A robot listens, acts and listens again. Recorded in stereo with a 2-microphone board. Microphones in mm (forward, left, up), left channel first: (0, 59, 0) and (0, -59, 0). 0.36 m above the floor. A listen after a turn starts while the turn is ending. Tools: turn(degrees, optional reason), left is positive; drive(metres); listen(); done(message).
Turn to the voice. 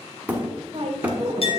turn(degrees=-55, reason="The woman speaking: about 55° right or 125° right.")
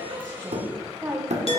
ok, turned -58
turn(degrees=-25, reason="So it is at 25° right.")
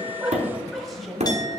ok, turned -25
done("Facing the woman speaking, 1 to 2 m away.")